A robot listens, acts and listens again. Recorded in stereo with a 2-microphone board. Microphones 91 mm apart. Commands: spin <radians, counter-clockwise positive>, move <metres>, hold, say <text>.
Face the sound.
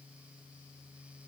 hold
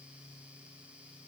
hold
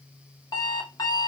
spin 0.87
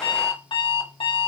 spin 1.40
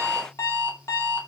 spin 0.61
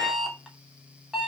say Facing the alarm clock.